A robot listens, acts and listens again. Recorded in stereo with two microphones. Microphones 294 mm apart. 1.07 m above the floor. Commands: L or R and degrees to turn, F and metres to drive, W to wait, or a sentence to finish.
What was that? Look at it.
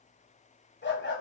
L40
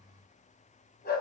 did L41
L35
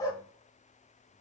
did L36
L15
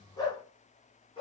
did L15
L20
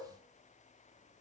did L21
W
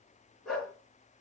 Facing the dog barking, 2 to 4 m away.